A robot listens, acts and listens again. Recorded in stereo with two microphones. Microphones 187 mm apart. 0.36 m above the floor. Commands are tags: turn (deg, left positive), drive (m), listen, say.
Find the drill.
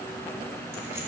<listen/>
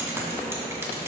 <listen/>
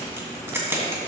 <say>I can't make out a drill to turn to.</say>